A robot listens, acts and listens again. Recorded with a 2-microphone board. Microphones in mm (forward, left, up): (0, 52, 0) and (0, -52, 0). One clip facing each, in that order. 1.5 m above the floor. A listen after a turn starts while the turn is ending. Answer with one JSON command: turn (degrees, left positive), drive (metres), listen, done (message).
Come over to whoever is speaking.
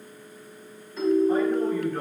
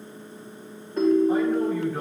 {"turn": -30}
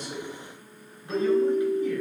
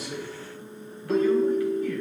{"turn": 20}
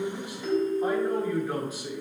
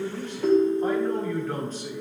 {"turn": 10}
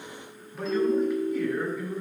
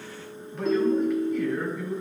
{"drive": 1.0}
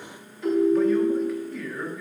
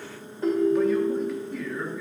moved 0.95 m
{"drive": 1.0}
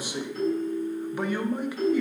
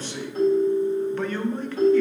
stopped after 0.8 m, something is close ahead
{"turn": 10}
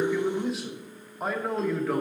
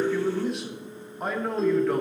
{"done": "Arrived at the man speaking, straight ahead."}